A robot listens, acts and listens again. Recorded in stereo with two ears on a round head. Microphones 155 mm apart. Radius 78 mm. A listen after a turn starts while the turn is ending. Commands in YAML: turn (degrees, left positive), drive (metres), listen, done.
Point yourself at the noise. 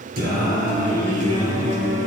turn: -40
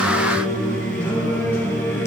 turn: 15
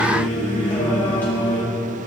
turn: 10
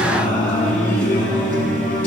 turn: 10
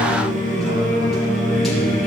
done: "Facing the singing."